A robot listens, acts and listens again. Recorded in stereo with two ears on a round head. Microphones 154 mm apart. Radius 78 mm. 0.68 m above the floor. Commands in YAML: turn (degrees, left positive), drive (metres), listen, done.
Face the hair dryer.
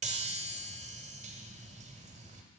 listen: true
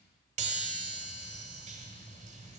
listen: true
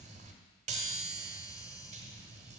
done: "I can't make out a hair dryer to turn to."